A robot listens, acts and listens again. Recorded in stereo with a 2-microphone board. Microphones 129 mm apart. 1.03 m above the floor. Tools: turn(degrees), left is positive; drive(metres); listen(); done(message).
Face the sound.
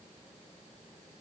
listen()
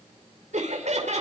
turn(degrees=-60)
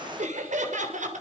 turn(degrees=-75)
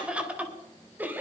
turn(degrees=-15)
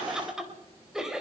done("Facing the laughter, 2 to 4 m away.")